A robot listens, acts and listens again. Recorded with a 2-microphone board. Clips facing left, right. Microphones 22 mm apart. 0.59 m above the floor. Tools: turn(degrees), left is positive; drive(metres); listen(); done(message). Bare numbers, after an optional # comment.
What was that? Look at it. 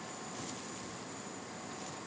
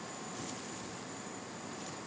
listen()
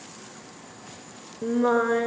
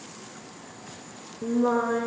# The singing: about 35° left or 145° left.
turn(35)
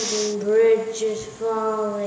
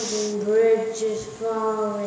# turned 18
# The singing: about 15° left or 165° left.
turn(15)
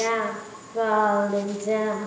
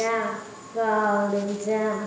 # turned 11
done("Found it: singing, straight ahead.")